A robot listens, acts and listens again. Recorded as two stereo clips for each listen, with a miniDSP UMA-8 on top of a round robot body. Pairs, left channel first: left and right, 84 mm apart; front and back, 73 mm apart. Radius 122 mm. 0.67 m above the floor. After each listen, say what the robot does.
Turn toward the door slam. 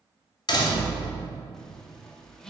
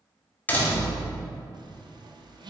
Turn 65° left.
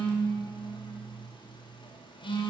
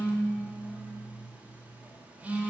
Facing where the door slam came from. I can't hear it now.